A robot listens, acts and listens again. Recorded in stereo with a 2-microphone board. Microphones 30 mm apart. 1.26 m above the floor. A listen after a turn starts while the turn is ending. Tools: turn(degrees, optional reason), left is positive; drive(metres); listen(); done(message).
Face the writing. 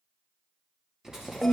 turn(degrees=-15, reason="The writing: about 15° right or 165° right.")
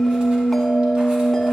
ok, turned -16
listen()
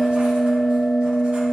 listen()
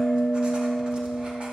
done("I heard writing, but can't make it out now. It was about straight ahead or 150° right.")